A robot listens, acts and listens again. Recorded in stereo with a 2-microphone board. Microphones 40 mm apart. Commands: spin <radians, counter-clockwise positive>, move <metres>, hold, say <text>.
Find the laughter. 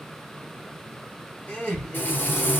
spin 0.52
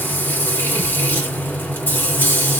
hold
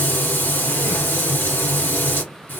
hold
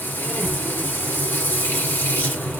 say I heard laughter, but can't make it out now. It was about straight ahead or 120° left.